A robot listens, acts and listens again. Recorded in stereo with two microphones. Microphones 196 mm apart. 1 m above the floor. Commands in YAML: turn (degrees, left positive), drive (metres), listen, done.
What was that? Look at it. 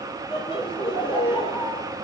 turn: 25
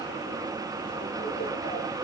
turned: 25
listen: true
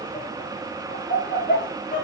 turn: 130
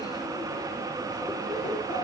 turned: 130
turn: 35
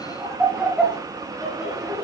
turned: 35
done: "Facing the laughter, over 4 m away."